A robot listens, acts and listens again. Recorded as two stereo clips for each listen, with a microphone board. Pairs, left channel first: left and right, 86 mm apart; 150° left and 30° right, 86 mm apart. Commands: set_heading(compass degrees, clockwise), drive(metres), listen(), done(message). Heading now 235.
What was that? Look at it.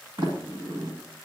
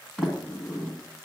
set_heading(355)
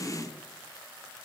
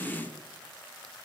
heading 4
set_heading(354)
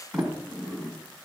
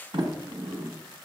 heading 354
done("Found it: a sliding door, straight ahead, 1 to 2 m away.")